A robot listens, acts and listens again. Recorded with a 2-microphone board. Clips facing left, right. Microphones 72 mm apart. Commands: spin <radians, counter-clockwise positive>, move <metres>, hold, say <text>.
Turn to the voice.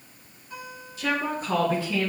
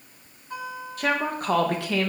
spin -1.13
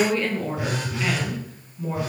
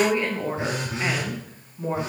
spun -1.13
spin -0.61
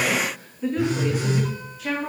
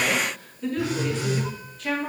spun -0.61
say Facing the woman speaking.